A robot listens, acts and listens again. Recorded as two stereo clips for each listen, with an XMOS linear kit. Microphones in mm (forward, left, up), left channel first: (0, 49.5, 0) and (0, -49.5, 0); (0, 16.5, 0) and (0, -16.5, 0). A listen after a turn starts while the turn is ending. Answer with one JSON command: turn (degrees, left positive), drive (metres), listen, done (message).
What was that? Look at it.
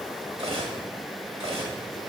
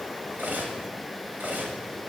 {"turn": -70}
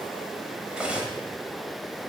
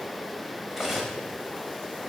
{"turn": -10}
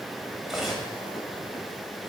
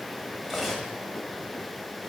{"done": "Facing the cutlery clinking."}